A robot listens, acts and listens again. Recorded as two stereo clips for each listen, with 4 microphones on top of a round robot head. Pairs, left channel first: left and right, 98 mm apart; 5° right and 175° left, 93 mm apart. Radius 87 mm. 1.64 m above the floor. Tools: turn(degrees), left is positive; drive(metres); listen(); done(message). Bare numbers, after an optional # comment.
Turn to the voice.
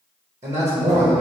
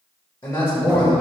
# The man speaking: 65° right.
turn(-65)
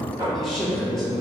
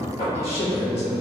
done("Found it: a man speaking, straight ahead, 1 to 2 m away.")